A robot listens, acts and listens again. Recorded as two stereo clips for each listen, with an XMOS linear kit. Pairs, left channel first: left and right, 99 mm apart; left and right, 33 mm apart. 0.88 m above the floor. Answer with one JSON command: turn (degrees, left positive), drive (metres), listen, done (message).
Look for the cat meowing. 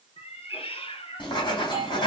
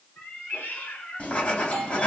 {"turn": 75}
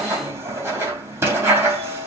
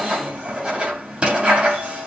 {"listen": true}
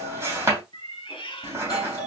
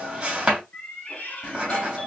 {"turn": 60}
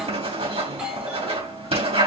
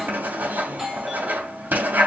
{"listen": true}
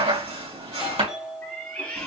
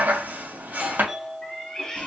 {"turn": 15}
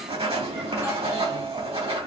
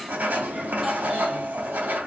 {"listen": true}
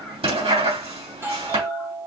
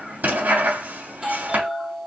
{"listen": true}
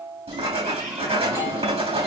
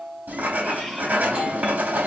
{"done": "I heard a cat meowing from this way, but can't make it out now."}